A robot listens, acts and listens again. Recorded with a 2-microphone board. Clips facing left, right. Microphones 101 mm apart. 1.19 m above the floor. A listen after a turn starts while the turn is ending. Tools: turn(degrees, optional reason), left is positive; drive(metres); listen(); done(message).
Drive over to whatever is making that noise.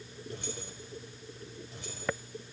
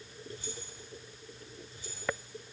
turn(degrees=75, reason="The keys jangling: about 75° left or 105° left.")
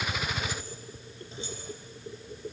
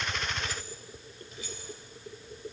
turn(degrees=30, reason="So it is at 30° left.")
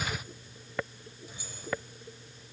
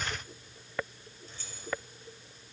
turn(degrees=10, reason="The keys jangling is now 10° left.")
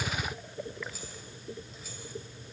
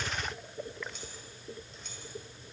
drive(metres=1.0)
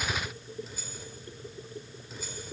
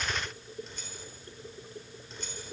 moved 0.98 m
drive(metres=1.0)
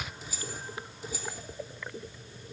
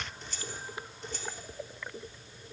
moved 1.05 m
drive(metres=1.0)
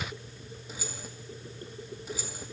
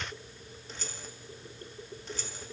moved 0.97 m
turn(degrees=10, reason="The keys jangling is now 10° left.")
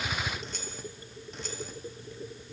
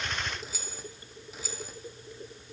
drive(metres=1.0)
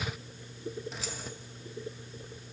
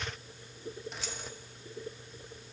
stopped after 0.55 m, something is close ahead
done("I am next to the keys jangling.")